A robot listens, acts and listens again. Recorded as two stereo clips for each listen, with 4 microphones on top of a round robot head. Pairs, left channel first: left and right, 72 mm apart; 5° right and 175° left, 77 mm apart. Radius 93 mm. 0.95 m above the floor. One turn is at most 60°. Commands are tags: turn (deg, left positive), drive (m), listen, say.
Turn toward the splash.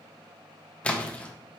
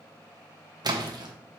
<turn deg="60"/>
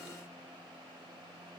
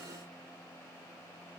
<turn deg="60"/>
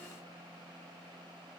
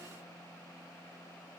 <turn deg="40"/>
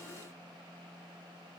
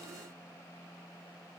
<say>I heard a splash from this way, but can't make it out now.</say>